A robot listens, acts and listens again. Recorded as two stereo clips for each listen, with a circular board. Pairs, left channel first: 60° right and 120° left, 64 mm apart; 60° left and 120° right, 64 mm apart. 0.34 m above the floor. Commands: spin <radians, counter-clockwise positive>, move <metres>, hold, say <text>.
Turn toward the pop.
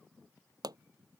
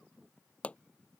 spin 2.18
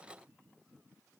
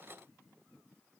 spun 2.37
spin -0.17
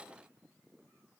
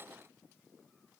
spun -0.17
say Facing where the pop came from. I can't hear it now.